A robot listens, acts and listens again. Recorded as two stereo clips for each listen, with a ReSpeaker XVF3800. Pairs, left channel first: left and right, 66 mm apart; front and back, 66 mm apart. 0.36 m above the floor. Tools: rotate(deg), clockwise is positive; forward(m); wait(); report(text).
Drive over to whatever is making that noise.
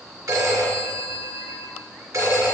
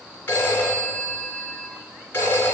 rotate(60)
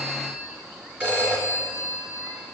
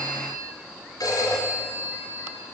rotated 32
rotate(25)
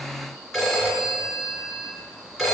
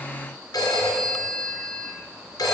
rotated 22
forward(1.0)
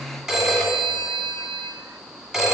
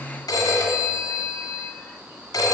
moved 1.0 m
forward(1.0)
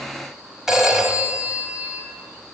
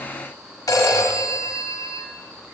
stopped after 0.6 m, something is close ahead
rotate(10)
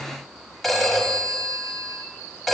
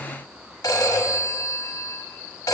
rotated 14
report("I am next to the phone ringing.")